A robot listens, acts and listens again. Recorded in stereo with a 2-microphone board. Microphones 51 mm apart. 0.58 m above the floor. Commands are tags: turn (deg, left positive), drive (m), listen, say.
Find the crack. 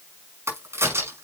<turn deg="-60"/>
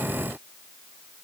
<listen/>
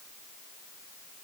<say>I heard a crack, but can't make it out now. It was about straight ahead or 60° right.</say>